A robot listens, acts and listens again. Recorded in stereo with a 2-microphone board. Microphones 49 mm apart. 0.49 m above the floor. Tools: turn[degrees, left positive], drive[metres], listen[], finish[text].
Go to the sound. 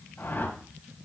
Thought: The whoosh: about 50° left or 130° left.
Action: turn[50]
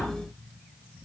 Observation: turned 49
Action: listen[]
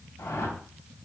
Thought: So it is at 80° left.
Action: turn[80]
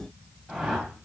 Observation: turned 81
Action: drive[1.0]
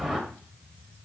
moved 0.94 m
Action: drive[1.0]
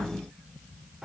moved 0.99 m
Thought: The whoosh is now 10° right.
Action: turn[-10]
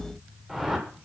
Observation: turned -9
Action: drive[1.0]
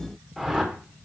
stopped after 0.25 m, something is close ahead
Action: finish[I am next to the whoosh.]